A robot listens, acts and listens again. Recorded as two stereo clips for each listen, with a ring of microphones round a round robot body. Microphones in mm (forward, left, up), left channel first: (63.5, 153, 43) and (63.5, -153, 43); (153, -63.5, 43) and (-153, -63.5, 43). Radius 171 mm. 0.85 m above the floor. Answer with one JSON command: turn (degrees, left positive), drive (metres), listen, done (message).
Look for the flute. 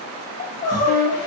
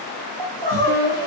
{"turn": 120}
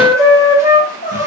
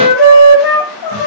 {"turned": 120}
{"turn": -10}
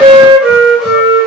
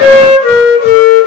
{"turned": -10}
{"done": "Facing the flute."}